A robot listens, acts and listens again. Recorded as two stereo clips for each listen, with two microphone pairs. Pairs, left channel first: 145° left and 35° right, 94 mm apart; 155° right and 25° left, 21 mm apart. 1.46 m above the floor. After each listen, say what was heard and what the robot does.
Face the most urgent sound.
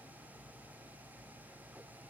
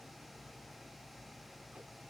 Keep listening.
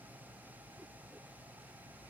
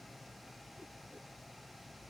Keep listening.
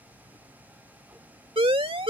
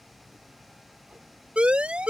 The siren: 10° right. Turn 10° right.
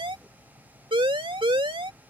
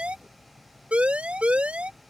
Facing the siren.